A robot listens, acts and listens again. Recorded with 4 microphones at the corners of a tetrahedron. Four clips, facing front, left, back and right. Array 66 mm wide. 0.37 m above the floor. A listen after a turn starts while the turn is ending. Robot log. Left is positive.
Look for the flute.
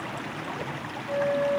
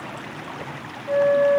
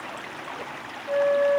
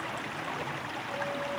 note: The flute: 120° left.
cmd yaw +120
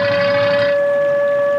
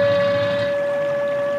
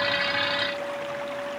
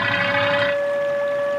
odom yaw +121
end: Facing the flute.